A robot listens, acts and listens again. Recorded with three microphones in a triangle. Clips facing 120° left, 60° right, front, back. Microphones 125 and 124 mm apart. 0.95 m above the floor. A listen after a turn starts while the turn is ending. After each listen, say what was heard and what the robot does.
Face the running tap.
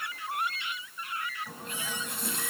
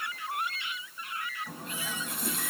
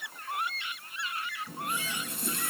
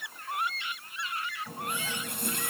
The running tap: 150° right. Turn 150° right.
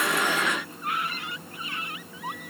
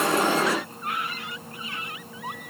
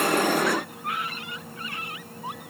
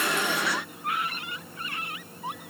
The running tap is now 15° right. Turn 15° right.
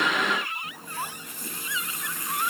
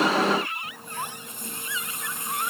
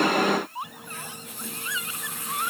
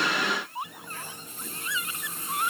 Found it: a running tap, straight ahead, 2 to 4 m away.